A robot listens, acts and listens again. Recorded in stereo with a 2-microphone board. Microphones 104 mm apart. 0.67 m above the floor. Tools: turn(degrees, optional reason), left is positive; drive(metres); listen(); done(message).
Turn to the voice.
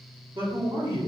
turn(degrees=-50, reason="The man speaking: about 50° right or 130° right.")
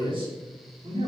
turn(degrees=-65, reason="So it is at 65° right.")
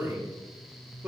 turn(degrees=-10, reason="The man speaking is now 10° right.")
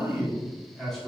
done("Facing the man speaking.")